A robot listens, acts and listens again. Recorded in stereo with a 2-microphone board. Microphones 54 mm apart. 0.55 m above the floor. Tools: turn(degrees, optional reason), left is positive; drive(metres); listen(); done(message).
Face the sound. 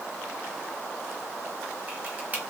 turn(degrees=-30, reason="The camera shutter: about 30° right or 150° right.")
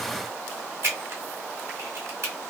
turn(degrees=-120, reason="So it is at 120° right.")
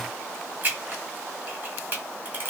turn(degrees=-40, reason="The camera shutter is now 40° right.")
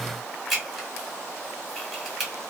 done("Facing the camera shutter.")